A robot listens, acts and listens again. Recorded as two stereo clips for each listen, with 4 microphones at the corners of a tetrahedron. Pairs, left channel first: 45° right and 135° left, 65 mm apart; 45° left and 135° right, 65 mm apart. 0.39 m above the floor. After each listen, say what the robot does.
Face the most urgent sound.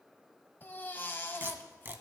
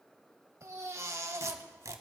Turn 100° right.
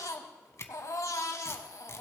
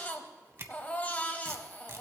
Turn 20° right.
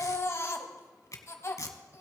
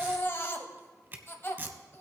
Facing the baby crying.